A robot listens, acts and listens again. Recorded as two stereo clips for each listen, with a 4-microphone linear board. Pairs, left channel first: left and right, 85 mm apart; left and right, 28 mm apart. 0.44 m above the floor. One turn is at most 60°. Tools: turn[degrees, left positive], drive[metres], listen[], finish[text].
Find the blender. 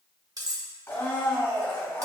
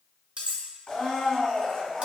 Thought: The blender: about 30° left or 150° left.
Action: turn[30]
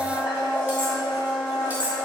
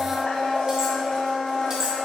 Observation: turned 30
Thought: So it is at 120° left.
Action: turn[60]
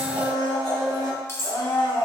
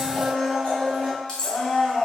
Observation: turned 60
Thought: The blender is now 60° left.
Action: turn[60]
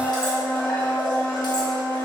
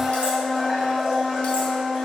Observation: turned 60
Thought: The blender is now 15° left.
Action: turn[15]
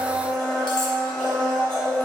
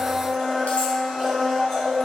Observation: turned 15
Action: finish[Facing the blender, 1 to 2 m away.]